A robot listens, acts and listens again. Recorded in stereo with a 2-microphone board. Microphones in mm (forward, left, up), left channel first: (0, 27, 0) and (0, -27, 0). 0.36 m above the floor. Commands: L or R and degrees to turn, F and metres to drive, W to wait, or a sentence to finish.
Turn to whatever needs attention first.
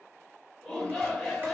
L30
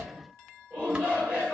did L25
R25
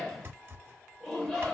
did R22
Facing the shout, 1 to 2 m away.